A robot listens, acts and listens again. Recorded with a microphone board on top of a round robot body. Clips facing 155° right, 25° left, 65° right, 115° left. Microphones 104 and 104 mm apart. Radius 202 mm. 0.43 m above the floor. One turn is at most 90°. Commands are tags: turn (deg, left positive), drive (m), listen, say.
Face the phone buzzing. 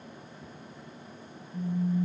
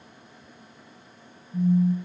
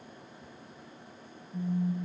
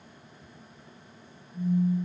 <turn deg="-30"/>
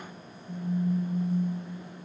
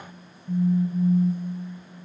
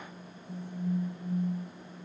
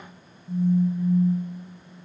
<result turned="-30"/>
<turn deg="15"/>
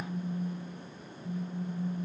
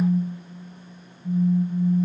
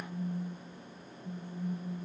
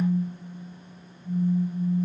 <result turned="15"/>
<say>Facing the phone buzzing.</say>